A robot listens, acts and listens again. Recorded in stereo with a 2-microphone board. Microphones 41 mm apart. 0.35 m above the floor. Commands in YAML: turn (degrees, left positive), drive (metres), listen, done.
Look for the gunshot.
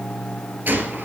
turn: -50
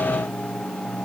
listen: true
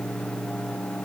done: "I heard a gunshot, but can't make it out now. It was about straight ahead or 80° right."